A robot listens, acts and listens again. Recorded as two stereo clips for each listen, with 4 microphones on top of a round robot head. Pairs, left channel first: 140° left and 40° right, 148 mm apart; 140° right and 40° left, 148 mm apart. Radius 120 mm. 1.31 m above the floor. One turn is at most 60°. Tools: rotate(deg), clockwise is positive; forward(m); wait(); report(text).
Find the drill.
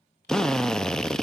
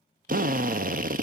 rotate(-55)
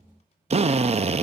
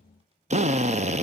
report("Found it: a drill, straight ahead.")